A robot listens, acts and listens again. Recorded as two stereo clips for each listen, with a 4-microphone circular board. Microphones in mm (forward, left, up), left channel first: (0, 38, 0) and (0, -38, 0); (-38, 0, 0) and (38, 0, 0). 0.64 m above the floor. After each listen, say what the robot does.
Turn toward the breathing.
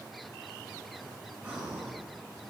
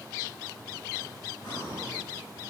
Turn 165° right.
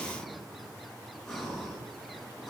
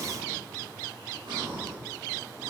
Turn 10° left.
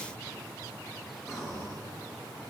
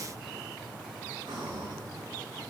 Found it: breathing, straight ahead.